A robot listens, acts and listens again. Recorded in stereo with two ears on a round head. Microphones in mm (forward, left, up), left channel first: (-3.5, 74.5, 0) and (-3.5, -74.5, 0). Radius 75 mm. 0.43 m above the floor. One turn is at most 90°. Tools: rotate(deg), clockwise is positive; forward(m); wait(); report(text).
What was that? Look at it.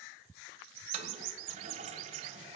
rotate(40)
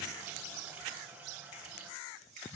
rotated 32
rotate(10)
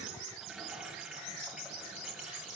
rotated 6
report("Found it: a toilet flushing, straight ahead.")